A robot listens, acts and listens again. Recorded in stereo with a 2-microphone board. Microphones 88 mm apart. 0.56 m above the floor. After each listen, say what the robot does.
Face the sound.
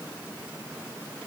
Keep listening.
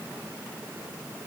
Keep listening.
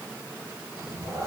Turn 35° right.
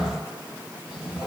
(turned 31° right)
Turn 15° right.
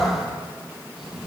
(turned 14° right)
Facing the cat meowing.